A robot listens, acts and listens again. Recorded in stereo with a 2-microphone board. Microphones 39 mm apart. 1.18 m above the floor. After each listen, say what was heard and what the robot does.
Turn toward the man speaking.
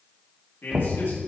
Turn 90° left.
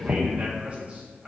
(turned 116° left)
So it is at 35° right. Turn 35° right.
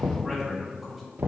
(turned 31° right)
Facing the man speaking, 2 to 4 m away.